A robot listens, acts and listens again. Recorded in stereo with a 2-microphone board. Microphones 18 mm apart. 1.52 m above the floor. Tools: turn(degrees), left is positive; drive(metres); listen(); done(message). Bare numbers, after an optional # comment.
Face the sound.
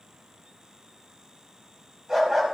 # The dog barking: about 25° right or 155° right.
turn(-25)
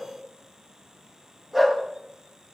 done("Facing the dog barking, 2 to 4 m away.")